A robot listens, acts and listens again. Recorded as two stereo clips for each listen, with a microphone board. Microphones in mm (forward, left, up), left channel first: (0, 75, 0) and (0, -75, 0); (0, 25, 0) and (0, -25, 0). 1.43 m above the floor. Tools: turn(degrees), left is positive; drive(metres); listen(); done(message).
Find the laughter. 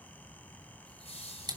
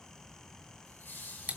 turn(degrees=45)
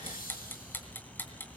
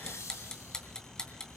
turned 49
turn(degrees=85)
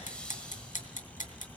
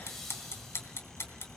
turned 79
done("Found it: laughter, straight ahead.")